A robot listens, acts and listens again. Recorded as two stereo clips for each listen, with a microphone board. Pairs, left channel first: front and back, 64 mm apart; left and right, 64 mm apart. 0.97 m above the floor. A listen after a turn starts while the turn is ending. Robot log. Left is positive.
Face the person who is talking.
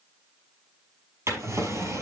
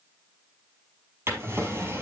cmd idle
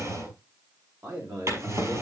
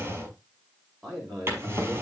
note: The man speaking: 175° right.
cmd yaw -175
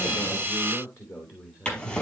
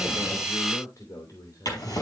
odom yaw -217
note: The man speaking is now 55° left.
cmd yaw +55
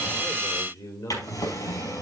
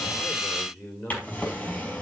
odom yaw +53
end: Facing the man speaking.